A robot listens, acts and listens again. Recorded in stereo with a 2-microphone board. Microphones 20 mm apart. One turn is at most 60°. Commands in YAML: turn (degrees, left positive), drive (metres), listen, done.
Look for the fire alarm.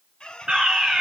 turn: -40
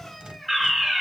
done: "Facing the fire alarm, 2 to 4 m away."